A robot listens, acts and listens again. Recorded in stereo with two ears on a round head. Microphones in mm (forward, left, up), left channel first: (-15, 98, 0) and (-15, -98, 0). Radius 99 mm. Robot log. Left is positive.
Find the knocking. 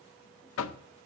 note: The knocking: about 65° left or 115° left.
cmd yaw +65
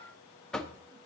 end: Found it: knocking, straight ahead.